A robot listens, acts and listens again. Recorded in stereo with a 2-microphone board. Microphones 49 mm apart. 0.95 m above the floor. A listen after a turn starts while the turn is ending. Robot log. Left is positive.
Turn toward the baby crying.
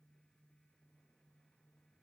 cmd idle
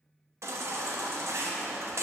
note: The baby crying: about 75° right or 105° right.
cmd yaw -75
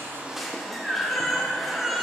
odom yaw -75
end: Found it: a baby crying, straight ahead.